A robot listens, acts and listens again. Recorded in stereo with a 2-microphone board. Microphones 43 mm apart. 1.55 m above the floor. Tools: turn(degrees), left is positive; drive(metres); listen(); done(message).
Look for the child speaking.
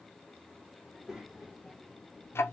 turn(degrees=-30)
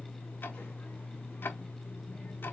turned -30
listen()
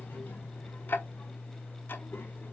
listen()
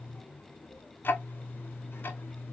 turn(degrees=60)
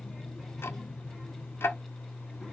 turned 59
listen()
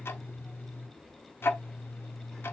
done("Facing the child speaking.")